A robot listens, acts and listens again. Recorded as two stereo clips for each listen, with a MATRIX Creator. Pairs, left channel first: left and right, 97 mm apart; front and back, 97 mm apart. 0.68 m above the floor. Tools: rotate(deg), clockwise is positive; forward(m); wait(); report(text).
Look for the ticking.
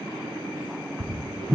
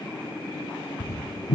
rotate(50)
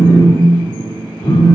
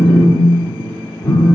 wait()
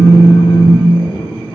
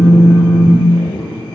wait()
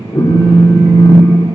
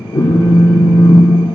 report("Facing where the ticking came from. I can't hear it now.")